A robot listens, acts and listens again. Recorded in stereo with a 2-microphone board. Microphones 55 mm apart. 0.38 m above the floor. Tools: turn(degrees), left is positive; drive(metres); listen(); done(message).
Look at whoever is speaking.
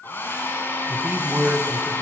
turn(degrees=-40)
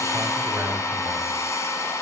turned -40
turn(degrees=-95)
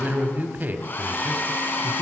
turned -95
turn(degrees=-40)
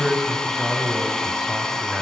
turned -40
turn(degrees=-10)
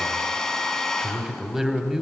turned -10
turn(degrees=-10)
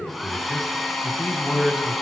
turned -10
done("Found it: a man speaking, straight ahead, 1 to 2 m away.")